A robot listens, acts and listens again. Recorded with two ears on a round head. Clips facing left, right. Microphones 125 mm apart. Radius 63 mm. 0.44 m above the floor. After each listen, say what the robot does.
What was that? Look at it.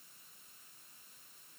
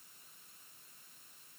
Keep listening.
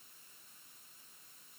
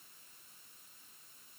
Keep listening.
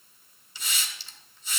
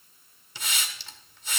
Turn 45° right.
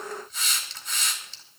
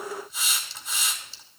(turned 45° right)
Found it: a hiss, straight ahead.